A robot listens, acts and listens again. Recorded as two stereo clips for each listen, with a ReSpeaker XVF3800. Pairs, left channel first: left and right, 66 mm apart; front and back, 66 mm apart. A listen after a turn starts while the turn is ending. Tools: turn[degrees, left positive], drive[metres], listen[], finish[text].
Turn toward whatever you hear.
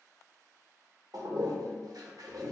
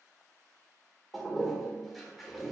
Thought: The toilet flushing: 90° right.
Action: turn[-90]
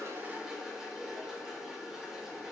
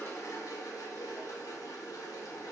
Thought: The toilet flushing is now 10° right.
Action: turn[-10]
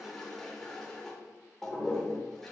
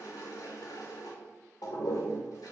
Action: finish[Found it: a toilet flushing, straight ahead.]